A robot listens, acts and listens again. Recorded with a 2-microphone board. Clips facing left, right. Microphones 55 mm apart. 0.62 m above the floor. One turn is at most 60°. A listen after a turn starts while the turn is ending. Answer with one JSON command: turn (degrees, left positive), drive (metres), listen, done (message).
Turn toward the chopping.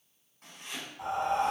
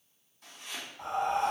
{"turn": 45}
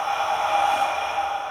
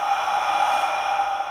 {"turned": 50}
{"listen": true}
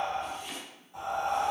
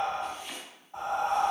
{"done": "Facing the chopping, 1 to 2 m away."}